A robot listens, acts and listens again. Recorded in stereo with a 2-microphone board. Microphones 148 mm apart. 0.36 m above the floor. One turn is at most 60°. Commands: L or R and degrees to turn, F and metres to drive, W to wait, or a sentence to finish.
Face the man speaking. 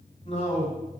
L45
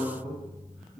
Facing the man speaking, 1 to 2 m away.